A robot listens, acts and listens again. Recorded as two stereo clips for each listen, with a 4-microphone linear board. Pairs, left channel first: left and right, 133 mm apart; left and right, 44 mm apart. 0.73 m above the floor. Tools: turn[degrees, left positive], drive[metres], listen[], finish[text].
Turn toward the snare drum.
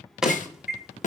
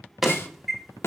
Thought: The snare drum: about 70° left or 110° left.
Action: turn[70]
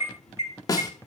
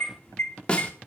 Thought: So it is at 30° left.
Action: turn[30]
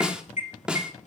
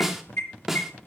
Action: finish[Found it: a snare drum, straight ahead, 1 to 2 m away.]